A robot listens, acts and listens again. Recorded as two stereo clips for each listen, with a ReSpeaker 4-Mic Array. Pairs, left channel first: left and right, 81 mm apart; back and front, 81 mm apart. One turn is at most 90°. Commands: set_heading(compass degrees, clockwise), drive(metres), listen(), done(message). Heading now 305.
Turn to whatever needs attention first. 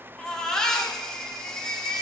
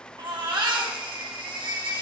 set_heading(295)
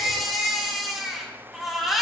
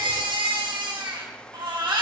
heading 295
done("Facing the baby crying, 2 to 4 m away.")